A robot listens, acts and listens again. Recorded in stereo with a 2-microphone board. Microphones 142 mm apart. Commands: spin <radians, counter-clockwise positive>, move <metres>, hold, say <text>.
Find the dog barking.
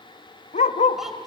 spin 1.05
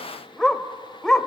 say Facing the dog barking, under 1 m away.